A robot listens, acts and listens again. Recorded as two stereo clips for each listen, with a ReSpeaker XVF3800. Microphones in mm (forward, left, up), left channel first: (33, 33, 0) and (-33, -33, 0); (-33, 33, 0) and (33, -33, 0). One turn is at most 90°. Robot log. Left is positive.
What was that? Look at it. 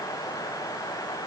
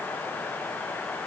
cmd idle
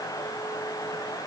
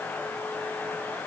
cmd idle
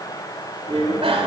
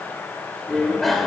note: The bicycle bell: 135° right.
cmd yaw -90
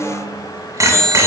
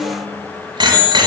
note: The bicycle bell is now 80° right.
cmd yaw -80
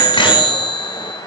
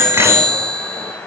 note: The bicycle bell is now 15° left.
cmd yaw +15
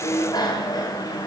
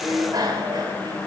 end: Facing the bicycle bell, 2 to 4 m away.